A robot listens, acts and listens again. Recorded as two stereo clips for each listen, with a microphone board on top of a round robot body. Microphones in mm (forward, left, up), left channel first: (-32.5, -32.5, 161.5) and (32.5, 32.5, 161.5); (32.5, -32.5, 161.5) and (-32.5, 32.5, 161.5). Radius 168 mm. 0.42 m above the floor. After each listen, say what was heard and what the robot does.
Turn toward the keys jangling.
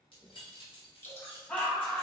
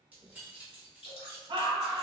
The keys jangling: 145° right. Turn 145° right.
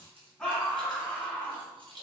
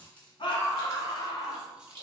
The keys jangling is now 60° left. Turn 60° left.
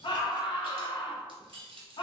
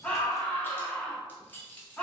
The keys jangling is now 30° left. Turn 30° left.
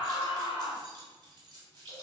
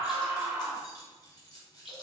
Facing the keys jangling, 1 to 2 m away.